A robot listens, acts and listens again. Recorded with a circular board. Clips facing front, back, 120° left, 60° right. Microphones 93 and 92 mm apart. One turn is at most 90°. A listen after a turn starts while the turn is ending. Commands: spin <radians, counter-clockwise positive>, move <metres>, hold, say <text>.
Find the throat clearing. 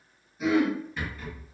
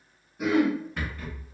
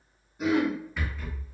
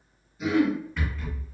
spin 1.57
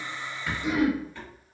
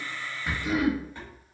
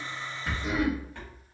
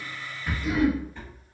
spin 1.13
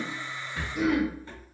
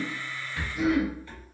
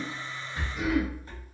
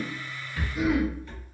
spin 0.26
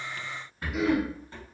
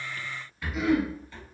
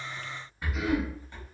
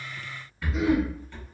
say Facing the throat clearing, 1 to 2 m away.